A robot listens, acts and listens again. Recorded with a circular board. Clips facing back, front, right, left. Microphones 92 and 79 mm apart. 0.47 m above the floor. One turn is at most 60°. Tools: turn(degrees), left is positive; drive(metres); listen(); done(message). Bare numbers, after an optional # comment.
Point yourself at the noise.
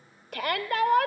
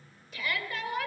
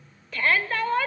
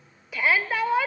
# The shout: 170° left.
turn(60)
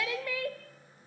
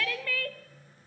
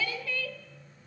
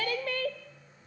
# The shout is now 110° left.
turn(60)
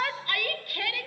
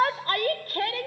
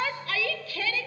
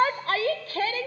# The shout is now 50° left.
turn(50)
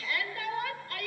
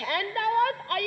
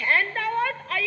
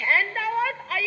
done("Facing the shout, 1 to 2 m away.")